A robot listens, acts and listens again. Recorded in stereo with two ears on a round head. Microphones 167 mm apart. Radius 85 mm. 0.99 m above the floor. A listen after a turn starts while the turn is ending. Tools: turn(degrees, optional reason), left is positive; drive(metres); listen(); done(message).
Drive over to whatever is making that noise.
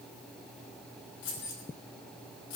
turn(degrees=75, reason="The keys jangling: about 75° left or 105° left.")
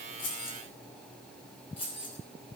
turn(degrees=30, reason="So it is at 30° left.")
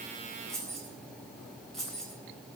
drive(metres=1.0)
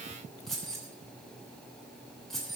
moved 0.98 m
drive(metres=1.0)
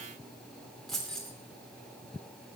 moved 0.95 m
drive(metres=1.0)
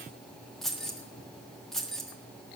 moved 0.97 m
drive(metres=1.0)
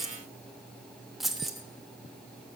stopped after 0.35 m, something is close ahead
done("I am next to the keys jangling.")